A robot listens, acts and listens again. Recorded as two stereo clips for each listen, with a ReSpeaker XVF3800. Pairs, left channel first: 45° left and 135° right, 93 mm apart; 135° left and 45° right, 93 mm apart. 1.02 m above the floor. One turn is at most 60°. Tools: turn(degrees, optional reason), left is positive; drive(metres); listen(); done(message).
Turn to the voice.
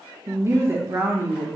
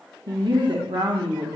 turn(degrees=-60, reason="The woman speaking: 75° right.")
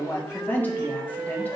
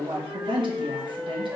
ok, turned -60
turn(degrees=-25, reason="The woman speaking is now 25° right.")
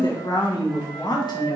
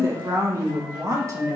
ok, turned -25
turn(degrees=10, reason="The woman speaking is now 10° left.")
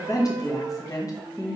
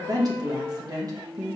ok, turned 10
done("Found it: a woman speaking, straight ahead.")